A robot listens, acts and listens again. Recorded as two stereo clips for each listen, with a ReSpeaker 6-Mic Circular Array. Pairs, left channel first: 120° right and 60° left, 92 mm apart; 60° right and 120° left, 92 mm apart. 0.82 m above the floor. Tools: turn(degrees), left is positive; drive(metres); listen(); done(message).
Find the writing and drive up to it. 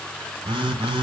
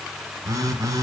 listen()
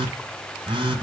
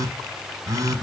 listen()
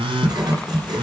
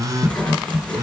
turn(degrees=20)
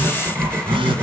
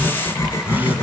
drive(metres=1.0)
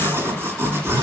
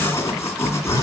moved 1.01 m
drive(metres=1.0)
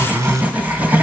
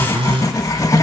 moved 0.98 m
turn(degrees=-10)
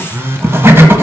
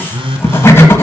drive(metres=1.0)
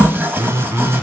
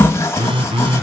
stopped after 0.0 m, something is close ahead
done("I am next to the writing.")